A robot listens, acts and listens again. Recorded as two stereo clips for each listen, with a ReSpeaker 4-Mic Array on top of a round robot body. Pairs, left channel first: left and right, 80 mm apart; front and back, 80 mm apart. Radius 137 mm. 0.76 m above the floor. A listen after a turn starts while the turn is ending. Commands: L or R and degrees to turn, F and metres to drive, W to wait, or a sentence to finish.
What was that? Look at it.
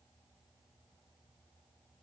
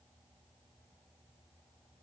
W
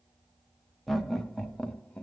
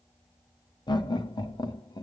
L15
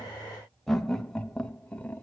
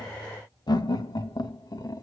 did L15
L20
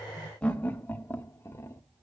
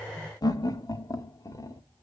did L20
L30
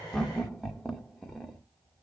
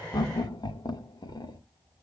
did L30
Found it: laughter, straight ahead, 1 to 2 m away.